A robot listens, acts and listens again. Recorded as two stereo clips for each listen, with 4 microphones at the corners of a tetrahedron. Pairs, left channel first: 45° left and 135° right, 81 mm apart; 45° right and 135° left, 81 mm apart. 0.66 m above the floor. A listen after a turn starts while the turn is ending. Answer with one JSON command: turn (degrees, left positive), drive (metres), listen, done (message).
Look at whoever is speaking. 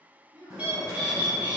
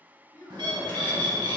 {"turn": -90}
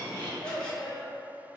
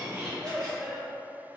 {"turn": 45}
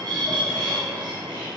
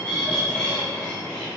{"listen": true}
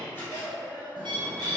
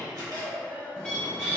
{"turn": 60}
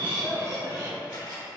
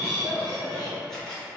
{"listen": true}
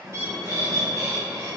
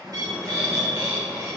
{"listen": true}
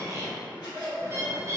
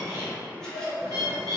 {"turn": 10}
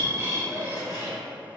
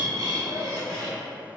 {"listen": true}
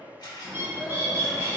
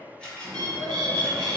{"listen": true}
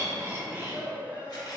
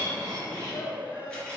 {"done": "Found it: a child speaking, straight ahead."}